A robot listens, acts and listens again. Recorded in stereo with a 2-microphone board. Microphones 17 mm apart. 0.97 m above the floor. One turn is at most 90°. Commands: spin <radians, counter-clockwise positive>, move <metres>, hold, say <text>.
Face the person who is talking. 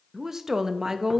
spin -0.52
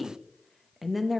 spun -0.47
say Facing the woman speaking.